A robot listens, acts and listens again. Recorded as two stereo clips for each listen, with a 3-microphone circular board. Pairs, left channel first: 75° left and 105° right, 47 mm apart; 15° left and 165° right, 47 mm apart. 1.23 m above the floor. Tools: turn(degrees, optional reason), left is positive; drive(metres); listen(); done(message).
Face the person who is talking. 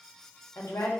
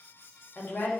turn(degrees=60, reason="The woman speaking: 60° left.")
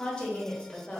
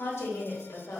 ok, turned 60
turn(degrees=10, reason="The woman speaking is now 10° left.")
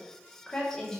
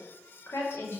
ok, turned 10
done("Facing the woman speaking, 1 to 2 m away.")